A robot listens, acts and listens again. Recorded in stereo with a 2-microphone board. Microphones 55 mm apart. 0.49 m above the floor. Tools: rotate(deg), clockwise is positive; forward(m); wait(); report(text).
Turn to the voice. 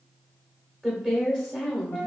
rotate(30)
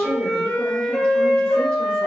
wait()
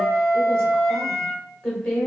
rotate(-15)
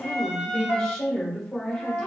report("Facing the woman speaking.")